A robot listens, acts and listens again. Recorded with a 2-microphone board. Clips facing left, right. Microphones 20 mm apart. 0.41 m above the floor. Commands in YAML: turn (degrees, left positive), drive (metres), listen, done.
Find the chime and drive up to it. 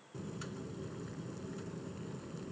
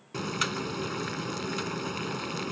listen: true
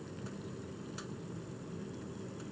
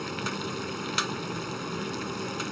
listen: true
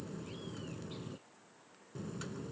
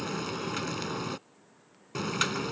done: "I can't make out a chime to turn to."